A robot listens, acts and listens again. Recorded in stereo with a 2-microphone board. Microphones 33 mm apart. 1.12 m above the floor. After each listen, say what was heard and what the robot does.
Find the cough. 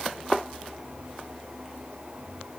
Keep listening.
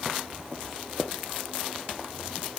Keep listening.
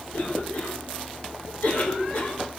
The cough: about 60° left or 120° left. Turn 60° left.
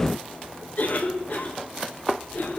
So it is at 60° left. Turn 60° left.
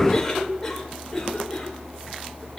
The cough is now 10° left. Turn 10° left.
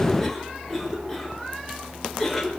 Found it: a cough, straight ahead, over 4 m away.